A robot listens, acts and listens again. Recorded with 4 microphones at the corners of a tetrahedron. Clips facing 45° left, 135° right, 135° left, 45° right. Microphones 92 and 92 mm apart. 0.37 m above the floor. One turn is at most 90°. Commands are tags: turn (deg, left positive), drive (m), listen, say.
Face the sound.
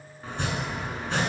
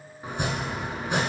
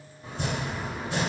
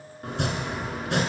<turn deg="-60"/>
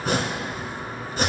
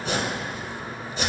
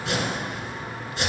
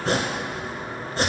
<say>Found it: chopping, straight ahead.</say>